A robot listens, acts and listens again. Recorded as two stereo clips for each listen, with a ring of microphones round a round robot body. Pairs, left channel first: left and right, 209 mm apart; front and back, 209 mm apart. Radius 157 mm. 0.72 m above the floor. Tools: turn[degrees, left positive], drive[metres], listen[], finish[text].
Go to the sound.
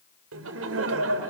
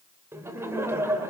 Thought: The laughter: 100° right.
Action: turn[-100]
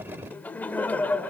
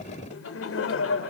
Action: drive[1.0]
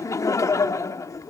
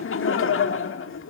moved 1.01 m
Thought: The laughter is now 15° left.
Action: turn[15]
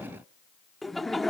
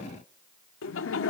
Action: drive[1.0]
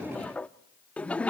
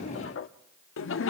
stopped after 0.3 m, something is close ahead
Action: finish[I am next to the laughter.]